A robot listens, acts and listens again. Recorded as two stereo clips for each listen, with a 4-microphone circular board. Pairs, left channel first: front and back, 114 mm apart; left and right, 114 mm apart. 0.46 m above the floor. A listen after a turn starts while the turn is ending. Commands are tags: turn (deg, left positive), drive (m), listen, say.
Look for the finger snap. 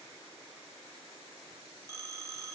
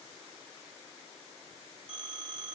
<listen/>
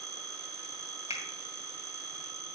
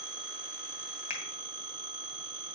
<turn deg="-30"/>
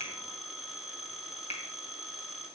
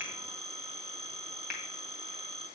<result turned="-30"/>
<say>Facing the finger snap.</say>